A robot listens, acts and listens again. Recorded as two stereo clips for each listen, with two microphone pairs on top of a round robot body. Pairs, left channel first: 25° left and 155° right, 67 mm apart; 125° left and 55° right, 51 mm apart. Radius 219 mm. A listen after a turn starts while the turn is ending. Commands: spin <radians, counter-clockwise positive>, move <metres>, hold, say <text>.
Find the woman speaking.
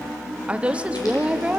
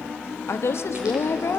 spin 2.44
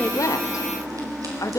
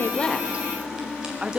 say Found it: a woman speaking, straight ahead, 1 to 2 m away.